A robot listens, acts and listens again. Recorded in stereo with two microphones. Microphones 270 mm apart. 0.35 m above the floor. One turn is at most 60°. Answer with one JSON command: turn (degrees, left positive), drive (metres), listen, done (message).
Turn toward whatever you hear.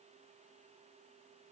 {"listen": true}
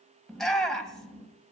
{"turn": 30}
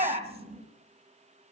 {"turn": -25}
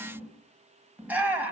{"done": "Facing the shout."}